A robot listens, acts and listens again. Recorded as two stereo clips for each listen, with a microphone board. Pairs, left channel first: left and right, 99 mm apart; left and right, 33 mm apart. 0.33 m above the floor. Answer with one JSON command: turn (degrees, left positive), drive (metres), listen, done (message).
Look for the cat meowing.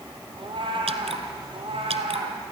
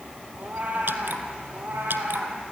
{"turn": -65}
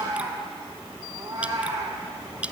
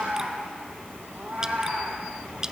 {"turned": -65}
{"turn": -35}
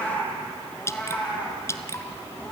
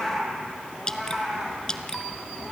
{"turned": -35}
{"turn": 15}
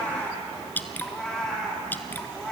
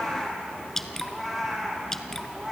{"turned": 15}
{"done": "Found it: a cat meowing, straight ahead."}